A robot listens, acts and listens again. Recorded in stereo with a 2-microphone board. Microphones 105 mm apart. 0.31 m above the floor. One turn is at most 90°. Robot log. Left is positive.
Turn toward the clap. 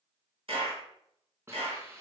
note: The clap: about 65° right or 115° right.
cmd yaw -65
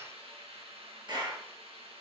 note: So it is at 50° right.
cmd yaw -50
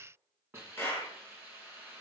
note: The clap is now 20° left.
cmd yaw +20
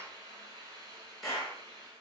end: Facing the clap, over 4 m away.